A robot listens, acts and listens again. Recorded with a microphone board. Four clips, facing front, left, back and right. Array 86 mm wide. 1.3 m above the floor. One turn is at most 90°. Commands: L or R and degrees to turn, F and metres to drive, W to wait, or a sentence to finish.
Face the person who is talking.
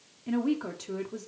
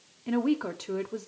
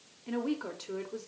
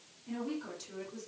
L85
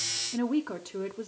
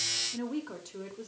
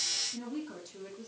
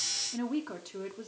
R15
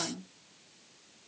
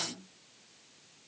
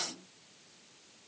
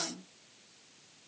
Found it: a woman speaking, straight ahead, under 1 m away.